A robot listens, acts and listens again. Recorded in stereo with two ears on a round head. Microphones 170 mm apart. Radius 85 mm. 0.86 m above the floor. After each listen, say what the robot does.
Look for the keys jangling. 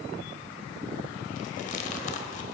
Keep listening.
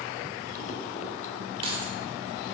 Turn 30° right.
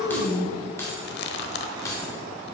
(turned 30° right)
Turn 20° left.
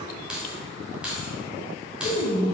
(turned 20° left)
Found it: keys jangling, straight ahead.